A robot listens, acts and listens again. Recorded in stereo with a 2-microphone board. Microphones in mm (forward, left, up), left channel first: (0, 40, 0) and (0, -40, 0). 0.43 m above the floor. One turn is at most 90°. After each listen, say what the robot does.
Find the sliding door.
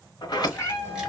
Turn 60° left.
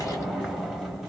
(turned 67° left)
Found it: a sliding door, straight ahead, under 1 m away.